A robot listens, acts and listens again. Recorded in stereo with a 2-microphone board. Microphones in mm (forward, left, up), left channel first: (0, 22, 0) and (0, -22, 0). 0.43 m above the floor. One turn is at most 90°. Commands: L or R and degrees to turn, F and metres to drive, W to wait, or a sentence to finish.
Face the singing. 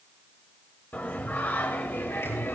L60
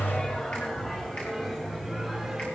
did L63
Found it: singing, straight ahead, 2 to 4 m away.